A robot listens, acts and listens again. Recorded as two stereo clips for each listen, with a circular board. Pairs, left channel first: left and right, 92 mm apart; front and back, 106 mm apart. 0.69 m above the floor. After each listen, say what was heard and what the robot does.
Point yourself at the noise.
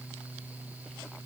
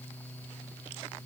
Keep listening.
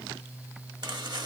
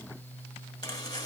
The chopping: 50° right. Turn 50° right.
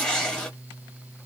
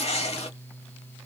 The chopping is now 10° left. Turn 10° left.
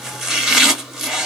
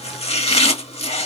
Found it: chopping, straight ahead.